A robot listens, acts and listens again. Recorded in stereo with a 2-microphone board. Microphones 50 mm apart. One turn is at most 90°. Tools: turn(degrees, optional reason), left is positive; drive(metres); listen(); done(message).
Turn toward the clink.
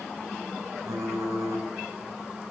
listen()
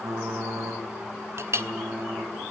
turn(degrees=-60, reason="The clink: about 60° right or 120° right.")
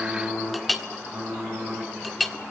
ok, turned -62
done("Facing the clink, 1 to 2 m away.")